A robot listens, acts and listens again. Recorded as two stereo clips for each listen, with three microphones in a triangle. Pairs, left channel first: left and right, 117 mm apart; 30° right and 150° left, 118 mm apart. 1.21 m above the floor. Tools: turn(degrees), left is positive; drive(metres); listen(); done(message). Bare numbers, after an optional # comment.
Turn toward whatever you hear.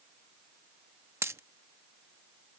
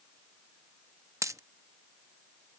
# The dropped coin: 150° right.
turn(-150)
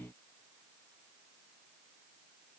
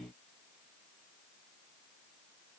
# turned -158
done("I heard a dropped coin from this way, but can't make it out now.")